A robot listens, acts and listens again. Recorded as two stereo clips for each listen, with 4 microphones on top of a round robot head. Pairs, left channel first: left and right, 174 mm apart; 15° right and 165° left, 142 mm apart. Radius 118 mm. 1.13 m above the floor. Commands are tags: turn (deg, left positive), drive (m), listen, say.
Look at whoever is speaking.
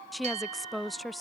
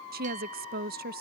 <turn deg="180"/>
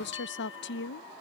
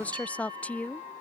<turn deg="65"/>
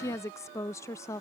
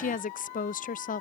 <turn deg="15"/>
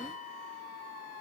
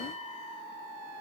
<listen/>
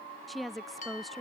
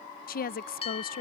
<say>Found it: a woman speaking, straight ahead.</say>